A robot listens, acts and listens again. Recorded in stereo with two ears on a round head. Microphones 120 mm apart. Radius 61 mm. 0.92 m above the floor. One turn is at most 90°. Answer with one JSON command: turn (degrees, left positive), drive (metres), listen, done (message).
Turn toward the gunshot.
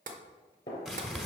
{"turn": 30}
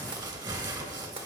{"listen": true}
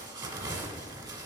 {"done": "I heard a gunshot, but can't make it out now. It was about straight ahead or 120° left."}